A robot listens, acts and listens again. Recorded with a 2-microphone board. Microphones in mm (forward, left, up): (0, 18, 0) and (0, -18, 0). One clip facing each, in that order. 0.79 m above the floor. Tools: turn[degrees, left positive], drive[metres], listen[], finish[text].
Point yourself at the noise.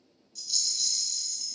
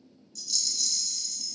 Action: turn[30]
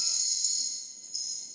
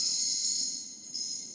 Thought: So it is at 15° right.
Action: turn[-15]
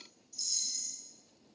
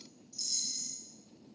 Action: finish[Found it: a rattle, straight ahead.]